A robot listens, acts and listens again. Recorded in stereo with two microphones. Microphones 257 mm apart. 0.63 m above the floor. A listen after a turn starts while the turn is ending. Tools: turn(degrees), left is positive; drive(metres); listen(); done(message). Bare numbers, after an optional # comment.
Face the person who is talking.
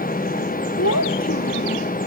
turn(90)
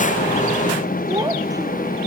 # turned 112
# So it is at 15° right.
turn(-15)
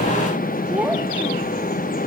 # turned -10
done("Facing the child speaking.")